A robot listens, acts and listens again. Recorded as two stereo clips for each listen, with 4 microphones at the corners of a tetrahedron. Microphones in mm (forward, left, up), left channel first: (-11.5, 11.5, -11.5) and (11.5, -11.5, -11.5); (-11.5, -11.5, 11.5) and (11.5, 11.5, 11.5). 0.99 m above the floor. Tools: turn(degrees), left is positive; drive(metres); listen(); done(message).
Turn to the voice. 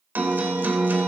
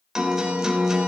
listen()
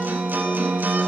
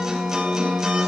listen()
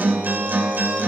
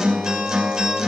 done("I can't make out anyone speaking to turn to.")